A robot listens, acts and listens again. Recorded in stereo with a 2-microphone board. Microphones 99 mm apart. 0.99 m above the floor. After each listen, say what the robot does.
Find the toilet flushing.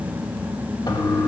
Turn 45° left.
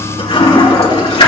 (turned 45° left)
Turn 90° left.
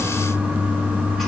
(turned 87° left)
Found it: a toilet flushing, straight ahead, 2 to 4 m away.